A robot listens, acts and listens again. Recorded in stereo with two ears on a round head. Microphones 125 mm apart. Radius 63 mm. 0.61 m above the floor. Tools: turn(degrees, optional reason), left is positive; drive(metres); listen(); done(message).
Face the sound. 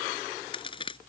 turn(degrees=35, reason="The crack: about 35° left or 145° left.")
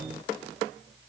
listen()
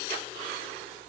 done("I heard a crack, but can't make it out now. It was about straight ahead or 110° left.")